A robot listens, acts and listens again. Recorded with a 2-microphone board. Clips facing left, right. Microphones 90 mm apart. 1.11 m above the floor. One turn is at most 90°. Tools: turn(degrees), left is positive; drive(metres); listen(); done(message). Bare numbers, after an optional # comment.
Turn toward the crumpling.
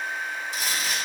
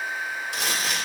# The crumpling: about 65° right or 115° right.
turn(-65)
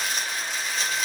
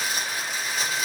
# So it is at 10° right.
turn(-10)
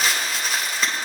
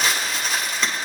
done("Found it: crumpling, straight ahead, 1 to 2 m away.")